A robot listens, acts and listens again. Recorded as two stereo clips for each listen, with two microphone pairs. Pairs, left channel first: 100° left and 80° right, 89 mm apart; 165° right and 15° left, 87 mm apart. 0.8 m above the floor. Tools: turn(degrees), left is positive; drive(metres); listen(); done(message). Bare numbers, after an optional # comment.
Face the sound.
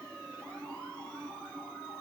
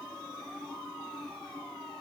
listen()
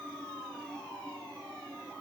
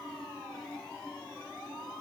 listen()
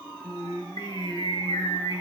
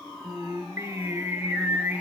# The singing: 90° left.
turn(90)
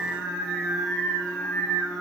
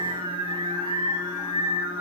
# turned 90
# The singing is now 15° left.
turn(15)
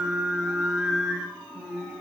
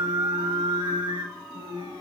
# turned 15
done("Found it: singing, straight ahead, 1 to 2 m away.")